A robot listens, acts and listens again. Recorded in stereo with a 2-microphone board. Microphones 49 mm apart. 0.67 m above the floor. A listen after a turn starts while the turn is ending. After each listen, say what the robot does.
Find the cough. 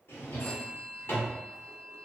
Keep listening.
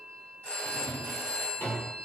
Keep listening.
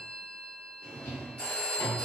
I can't make out a cough, only a drawer and a phone ringing.